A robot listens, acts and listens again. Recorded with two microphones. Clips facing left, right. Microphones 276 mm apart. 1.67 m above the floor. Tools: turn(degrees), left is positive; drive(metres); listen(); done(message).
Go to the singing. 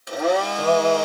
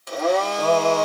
turn(degrees=30)
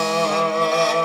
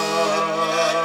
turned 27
turn(degrees=145)
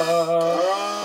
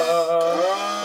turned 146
drive(metres=1.0)
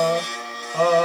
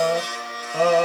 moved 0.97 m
turn(degrees=-10)
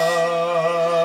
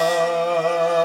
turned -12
drive(metres=1.0)
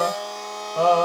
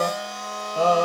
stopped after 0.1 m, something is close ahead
done("I am next to the singing.")